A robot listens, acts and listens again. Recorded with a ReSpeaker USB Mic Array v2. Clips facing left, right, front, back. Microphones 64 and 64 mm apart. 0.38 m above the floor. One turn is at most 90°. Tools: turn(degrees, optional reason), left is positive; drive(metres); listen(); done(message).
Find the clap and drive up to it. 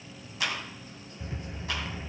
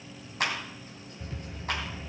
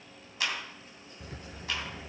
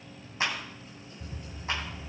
turn(degrees=-90, reason="The clap: 125° right.")
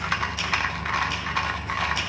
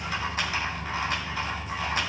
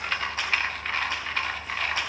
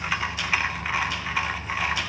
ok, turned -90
turn(degrees=-35, reason="Nothing new. It was at 35° right.")
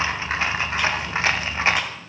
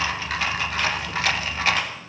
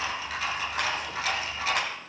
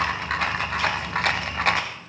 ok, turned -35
listen()
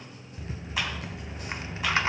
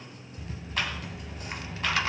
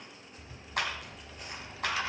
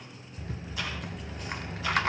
done("Facing where the clap came from. I can't hear it now. I did not reach it.")